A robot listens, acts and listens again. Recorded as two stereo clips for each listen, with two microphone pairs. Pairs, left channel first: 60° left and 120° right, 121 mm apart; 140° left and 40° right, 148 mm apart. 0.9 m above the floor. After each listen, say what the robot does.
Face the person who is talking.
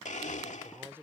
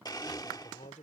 Turn 170° left.
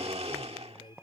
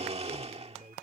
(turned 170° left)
Turn 10° left.
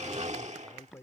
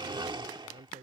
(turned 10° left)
Found it: a man speaking, straight ahead.